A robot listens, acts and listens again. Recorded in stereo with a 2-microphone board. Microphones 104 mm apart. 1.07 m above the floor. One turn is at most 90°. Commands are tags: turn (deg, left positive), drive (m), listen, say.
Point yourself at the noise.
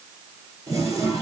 <turn deg="-30"/>
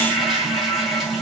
<say>Facing the toilet flushing.</say>